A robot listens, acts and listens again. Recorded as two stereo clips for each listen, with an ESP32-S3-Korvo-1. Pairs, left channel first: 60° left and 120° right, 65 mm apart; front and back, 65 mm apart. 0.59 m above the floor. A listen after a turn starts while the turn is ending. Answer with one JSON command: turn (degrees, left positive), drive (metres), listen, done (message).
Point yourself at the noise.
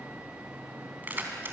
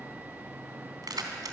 {"turn": -175}
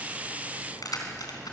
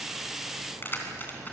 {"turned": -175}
{"turn": 55}
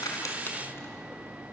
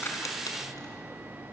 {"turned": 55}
{"listen": true}
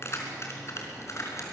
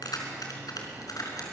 {"turn": 20}
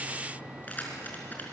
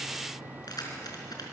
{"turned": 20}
{"done": "Facing the keys jangling, over 4 m away."}